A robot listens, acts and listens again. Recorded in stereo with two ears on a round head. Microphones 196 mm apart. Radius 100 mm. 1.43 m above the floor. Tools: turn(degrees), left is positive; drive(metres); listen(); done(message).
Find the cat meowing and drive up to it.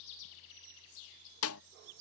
listen()
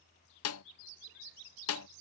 listen()
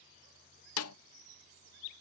done("I can't make out a cat meowing to turn to.")